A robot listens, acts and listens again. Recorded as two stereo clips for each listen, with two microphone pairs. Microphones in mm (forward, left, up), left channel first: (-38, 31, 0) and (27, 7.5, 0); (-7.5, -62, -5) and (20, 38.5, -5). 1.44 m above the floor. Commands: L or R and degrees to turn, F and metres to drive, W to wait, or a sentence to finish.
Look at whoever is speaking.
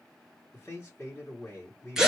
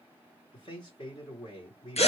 R140
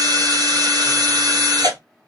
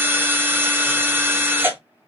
W
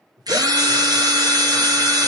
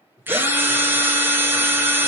R35
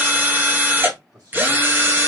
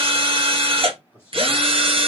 L10
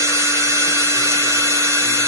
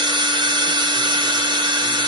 W
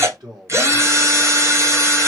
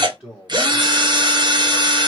Facing the man speaking.